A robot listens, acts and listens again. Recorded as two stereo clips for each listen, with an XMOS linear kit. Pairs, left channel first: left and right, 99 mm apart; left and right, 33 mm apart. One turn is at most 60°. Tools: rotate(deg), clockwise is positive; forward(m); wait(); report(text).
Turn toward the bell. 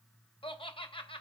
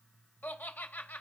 wait()
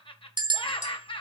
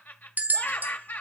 rotate(55)
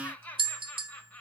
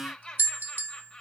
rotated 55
rotate(60)
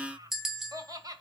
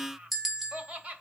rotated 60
report("Facing the bell.")